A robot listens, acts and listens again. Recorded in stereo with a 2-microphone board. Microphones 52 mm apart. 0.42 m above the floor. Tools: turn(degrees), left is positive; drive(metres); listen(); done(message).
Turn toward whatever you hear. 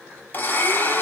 turn(degrees=40)
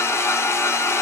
turn(degrees=90)
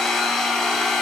done("Found it: a blender, straight ahead, 1 to 2 m away.")